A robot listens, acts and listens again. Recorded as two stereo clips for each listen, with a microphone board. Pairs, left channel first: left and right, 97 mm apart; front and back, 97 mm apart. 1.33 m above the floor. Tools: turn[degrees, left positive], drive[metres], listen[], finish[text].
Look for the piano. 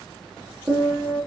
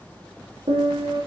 Thought: The piano: 155° right.
Action: turn[-155]
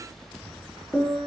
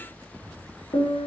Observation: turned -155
Thought: The piano is now 10° left.
Action: turn[10]
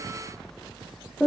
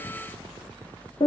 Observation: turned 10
Action: finish[Found it: a piano, straight ahead.]